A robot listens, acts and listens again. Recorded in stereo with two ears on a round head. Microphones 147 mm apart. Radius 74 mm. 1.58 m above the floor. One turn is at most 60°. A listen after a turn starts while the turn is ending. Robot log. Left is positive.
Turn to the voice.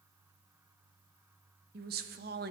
note: The woman speaking: about 65° right or 115° right.
cmd yaw -60
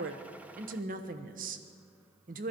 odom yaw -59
note: So it is at 55° right.
cmd yaw -55
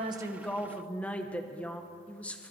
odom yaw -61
end: Facing the woman speaking.